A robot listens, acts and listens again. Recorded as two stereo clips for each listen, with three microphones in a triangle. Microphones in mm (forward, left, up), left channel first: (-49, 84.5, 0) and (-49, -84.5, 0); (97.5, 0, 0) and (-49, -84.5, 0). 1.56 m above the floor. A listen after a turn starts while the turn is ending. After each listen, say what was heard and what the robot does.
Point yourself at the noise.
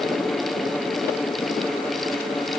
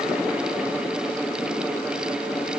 Keep listening.
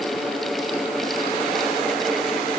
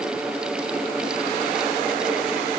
Keep listening.
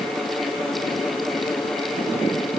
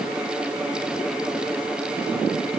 I can't make out anything.